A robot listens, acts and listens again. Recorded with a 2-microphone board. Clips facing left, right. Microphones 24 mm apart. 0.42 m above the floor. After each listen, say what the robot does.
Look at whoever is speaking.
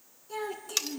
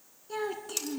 Turn 30° right.
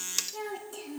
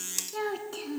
Turn 140° right.
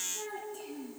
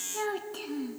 Turn 75° right.
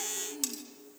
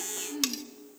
Turn 30° right.
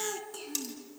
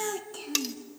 Turn 10° right.
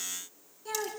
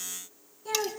Found it: a child speaking, straight ahead.